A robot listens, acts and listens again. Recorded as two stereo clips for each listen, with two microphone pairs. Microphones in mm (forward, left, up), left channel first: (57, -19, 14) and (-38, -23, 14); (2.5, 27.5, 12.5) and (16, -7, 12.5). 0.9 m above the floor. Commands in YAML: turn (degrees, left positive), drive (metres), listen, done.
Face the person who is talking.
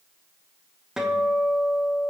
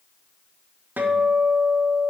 listen: true
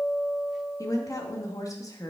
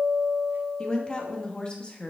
turn: 50
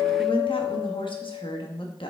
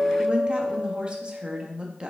done: "Found it: a woman speaking, straight ahead, 1 to 2 m away."